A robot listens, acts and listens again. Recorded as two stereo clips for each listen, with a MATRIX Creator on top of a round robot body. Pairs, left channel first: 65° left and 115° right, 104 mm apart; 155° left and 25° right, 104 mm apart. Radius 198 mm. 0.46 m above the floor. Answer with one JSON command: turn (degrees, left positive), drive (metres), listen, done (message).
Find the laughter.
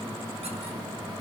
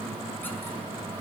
{"listen": true}
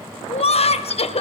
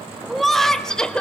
{"turn": 75}
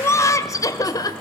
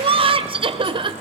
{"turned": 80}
{"turn": 15}
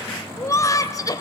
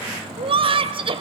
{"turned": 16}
{"turn": 15}
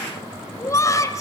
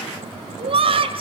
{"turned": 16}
{"turn": 10}
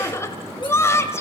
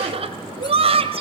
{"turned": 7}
{"done": "Found it: laughter, straight ahead, 2 to 4 m away."}